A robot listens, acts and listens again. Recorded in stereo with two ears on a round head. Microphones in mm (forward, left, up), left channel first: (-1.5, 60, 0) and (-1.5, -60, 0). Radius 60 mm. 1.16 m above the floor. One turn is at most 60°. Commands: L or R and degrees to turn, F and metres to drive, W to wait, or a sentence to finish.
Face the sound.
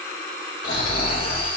L60
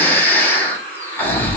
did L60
L15
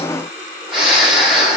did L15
Found it: snoring, straight ahead.